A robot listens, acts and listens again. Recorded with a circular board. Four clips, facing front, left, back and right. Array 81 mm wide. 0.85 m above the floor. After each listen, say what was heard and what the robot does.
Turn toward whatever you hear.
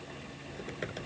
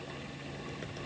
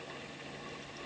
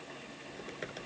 The typing on a keyboard: 20° right. Turn 20° right.
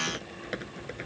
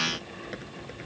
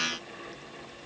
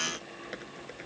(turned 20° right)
Found it: typing on a keyboard, straight ahead.